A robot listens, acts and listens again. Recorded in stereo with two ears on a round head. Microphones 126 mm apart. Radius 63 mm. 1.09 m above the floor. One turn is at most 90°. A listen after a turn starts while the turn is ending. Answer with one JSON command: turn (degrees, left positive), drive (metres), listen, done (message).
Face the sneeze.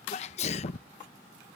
{"turn": 50}
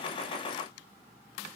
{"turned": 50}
{"listen": true}
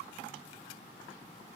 {"done": "I heard a sneeze, but can't make it out now. It was about straight ahead or 80° left."}